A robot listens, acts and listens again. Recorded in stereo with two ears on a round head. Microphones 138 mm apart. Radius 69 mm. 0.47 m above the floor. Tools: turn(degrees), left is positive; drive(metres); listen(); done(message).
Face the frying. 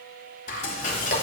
turn(degrees=60)
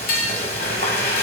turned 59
turn(degrees=65)
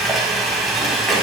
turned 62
done("Found it: frying, straight ahead, 1 to 2 m away.")